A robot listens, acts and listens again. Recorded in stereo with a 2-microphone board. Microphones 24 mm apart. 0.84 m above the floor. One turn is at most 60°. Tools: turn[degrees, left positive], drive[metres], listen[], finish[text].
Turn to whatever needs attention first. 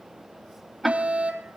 Thought: The fire alarm: about 65° right or 115° right.
Action: turn[-60]
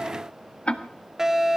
Thought: So it is at 20° right.
Action: turn[-20]
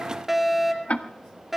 Action: finish[Facing the fire alarm.]